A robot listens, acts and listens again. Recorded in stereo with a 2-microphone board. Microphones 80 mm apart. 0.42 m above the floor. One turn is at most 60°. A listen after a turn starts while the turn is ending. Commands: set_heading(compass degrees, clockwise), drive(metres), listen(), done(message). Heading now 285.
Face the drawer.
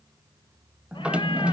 set_heading(315)
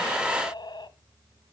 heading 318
listen()
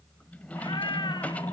set_heading(298)
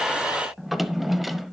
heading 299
done("Found it: a drawer, straight ahead.")